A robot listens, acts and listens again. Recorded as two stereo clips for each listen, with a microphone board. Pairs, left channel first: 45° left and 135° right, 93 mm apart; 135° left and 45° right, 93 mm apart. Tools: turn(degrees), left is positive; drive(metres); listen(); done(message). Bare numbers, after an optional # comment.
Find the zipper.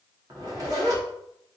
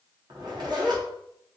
# The zipper: 85° right.
turn(-85)
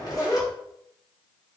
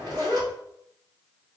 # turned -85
done("Facing the zipper, 1 to 2 m away.")